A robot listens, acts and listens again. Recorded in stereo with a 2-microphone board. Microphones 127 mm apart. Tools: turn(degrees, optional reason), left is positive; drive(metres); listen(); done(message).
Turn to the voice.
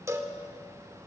listen()
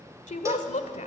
turn(degrees=70, reason="The woman speaking: about 70° left or 110° left.")
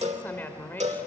turn(degrees=15, reason="So it is at 15° left.")
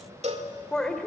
done("Facing the woman speaking, 1 to 2 m away.")